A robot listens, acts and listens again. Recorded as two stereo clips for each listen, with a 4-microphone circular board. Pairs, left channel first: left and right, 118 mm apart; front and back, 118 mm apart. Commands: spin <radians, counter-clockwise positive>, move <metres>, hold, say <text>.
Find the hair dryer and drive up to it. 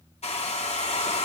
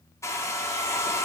spin 1.13
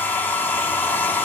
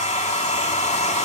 spin 0.26
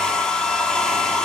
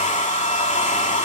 move 1.0
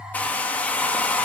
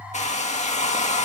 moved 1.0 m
spin 0.17
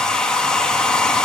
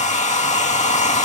move 1.0
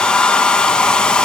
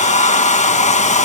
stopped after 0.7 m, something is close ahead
say I am next to the hair dryer.